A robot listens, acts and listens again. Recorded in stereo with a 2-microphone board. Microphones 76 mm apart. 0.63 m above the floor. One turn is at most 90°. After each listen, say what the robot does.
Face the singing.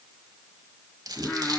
Turn 30° left.
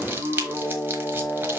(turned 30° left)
Turn 90° left.
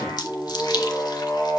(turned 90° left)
Turn 45° left.
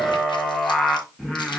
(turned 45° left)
Turn 10° left.
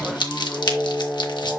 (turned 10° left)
Facing the singing, 1 to 2 m away.